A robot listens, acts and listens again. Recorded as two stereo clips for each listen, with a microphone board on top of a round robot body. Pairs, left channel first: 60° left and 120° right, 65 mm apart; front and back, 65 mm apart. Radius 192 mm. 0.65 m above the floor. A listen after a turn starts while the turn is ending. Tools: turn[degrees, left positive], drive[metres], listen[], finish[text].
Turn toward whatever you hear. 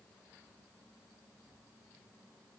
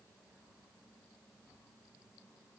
Action: listen[]
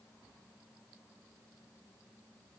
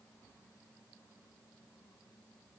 Action: listen[]
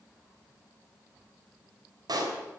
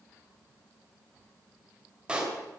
Thought: The pop: 105° right.
Action: turn[-105]
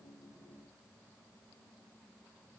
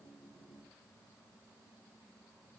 Action: finish[Facing where the pop came from. I can't hear it now.]